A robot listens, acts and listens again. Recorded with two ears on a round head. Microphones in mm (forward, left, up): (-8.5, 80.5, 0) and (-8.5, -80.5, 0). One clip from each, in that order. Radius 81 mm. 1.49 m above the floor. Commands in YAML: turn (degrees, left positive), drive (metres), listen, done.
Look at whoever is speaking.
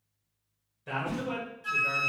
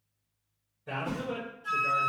turn: 70
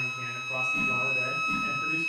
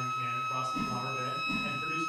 listen: true
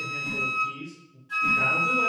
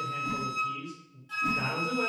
turn: 30
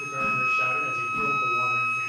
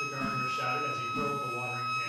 listen: true
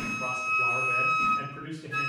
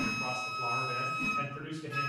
turn: 30
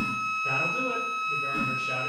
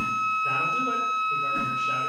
listen: true
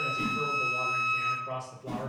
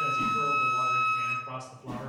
done: "Facing the man speaking."